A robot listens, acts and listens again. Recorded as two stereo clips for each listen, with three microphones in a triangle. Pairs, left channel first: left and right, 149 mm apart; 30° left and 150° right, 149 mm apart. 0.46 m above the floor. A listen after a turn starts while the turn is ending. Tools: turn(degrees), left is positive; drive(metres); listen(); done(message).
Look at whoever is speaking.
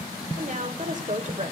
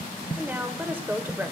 turn(degrees=-75)
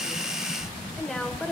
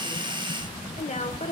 done("Found it: a woman speaking, straight ahead.")